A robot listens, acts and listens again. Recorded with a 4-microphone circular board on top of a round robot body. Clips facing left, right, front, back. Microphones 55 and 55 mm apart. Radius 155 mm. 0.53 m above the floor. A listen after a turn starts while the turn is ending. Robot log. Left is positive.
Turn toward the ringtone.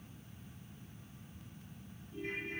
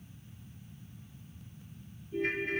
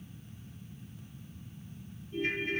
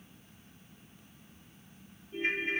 note: The ringtone: 110° right.
cmd yaw -110
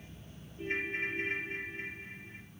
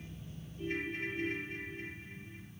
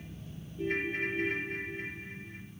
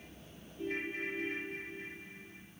note: The ringtone is now 25° left.
cmd yaw +25
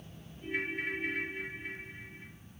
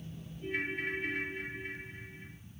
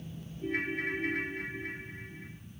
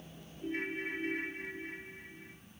end: Facing the ringtone, 1 to 2 m away.